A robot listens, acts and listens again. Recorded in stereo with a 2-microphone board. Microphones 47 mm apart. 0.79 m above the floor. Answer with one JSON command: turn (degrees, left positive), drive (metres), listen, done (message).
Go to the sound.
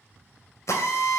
{"turn": 70}
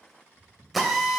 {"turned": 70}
{"drive": 1.0}
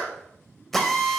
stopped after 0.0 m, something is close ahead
{"done": "Something is in my way. I am facing the drill but have not reached it."}